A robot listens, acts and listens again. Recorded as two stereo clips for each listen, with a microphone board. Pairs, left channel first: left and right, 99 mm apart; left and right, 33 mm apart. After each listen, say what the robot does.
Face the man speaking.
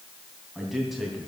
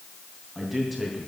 Turn 30° left.
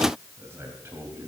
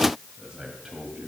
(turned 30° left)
Turn 25° right.
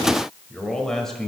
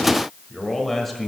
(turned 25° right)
Facing the man speaking.